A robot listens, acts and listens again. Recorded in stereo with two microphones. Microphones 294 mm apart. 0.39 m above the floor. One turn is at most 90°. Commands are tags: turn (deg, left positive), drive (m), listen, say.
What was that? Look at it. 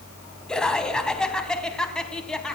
<turn deg="30"/>
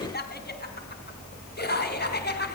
<turn deg="90"/>
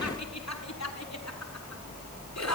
<turn deg="65"/>
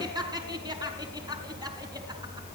<turn deg="-15"/>
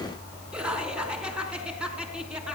<say>Found it: laughter, straight ahead.</say>